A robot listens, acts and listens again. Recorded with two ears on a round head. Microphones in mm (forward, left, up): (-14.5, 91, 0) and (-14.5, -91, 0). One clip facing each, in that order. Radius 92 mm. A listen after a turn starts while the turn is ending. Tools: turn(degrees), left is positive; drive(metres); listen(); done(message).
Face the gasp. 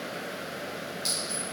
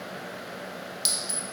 listen()
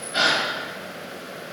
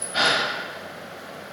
turn(degrees=30)
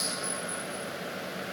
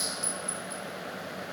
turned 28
listen()
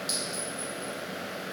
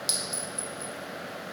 done("I heard a gasp, but can't make it out now. It was about straight ahead or 120° left.")